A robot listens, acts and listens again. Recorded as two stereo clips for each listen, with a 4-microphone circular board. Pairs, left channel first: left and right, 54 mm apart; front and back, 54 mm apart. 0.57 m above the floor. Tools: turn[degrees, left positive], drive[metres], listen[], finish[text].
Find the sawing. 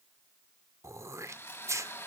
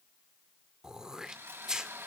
Thought: The sawing: 135° left.
Action: turn[135]
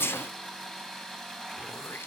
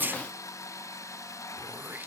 Thought: The sawing is now 10° left.
Action: turn[10]
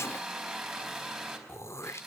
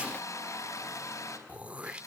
Action: finish[Facing the sawing, over 4 m away.]